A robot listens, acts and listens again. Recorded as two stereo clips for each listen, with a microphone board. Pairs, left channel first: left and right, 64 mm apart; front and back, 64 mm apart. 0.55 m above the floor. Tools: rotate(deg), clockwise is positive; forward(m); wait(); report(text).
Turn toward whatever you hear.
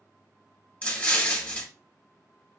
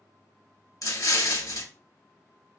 rotate(-20)
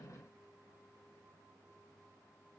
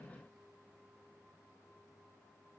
report("I heard an explosion from this way, but can't make it out now.")